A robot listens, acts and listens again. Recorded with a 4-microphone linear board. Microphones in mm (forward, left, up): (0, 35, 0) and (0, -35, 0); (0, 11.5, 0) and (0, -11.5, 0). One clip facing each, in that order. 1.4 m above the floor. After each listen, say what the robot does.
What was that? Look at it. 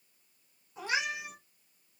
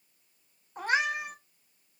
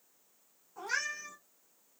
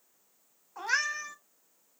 Turn 45° right.
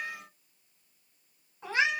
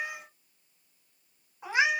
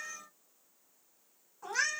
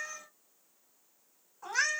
Turn 15° right.
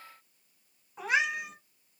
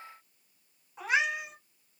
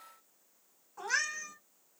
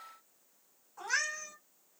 Found it: a cat meowing, straight ahead, 1 to 2 m away.